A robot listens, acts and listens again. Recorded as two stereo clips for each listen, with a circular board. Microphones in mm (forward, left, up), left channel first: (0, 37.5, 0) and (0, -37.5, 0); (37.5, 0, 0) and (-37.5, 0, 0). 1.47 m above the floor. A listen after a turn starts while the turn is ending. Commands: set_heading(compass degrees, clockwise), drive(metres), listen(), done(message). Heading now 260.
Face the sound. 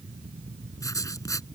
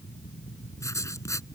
set_heading(215)
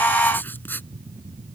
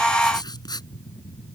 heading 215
set_heading(190)
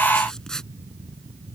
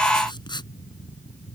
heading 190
done("Facing the writing.")